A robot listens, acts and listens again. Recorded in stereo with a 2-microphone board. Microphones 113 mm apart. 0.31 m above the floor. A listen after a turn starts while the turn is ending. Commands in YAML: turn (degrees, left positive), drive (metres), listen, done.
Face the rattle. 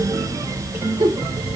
listen: true
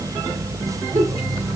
listen: true
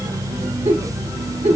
done: "I can't make out a rattle to turn to."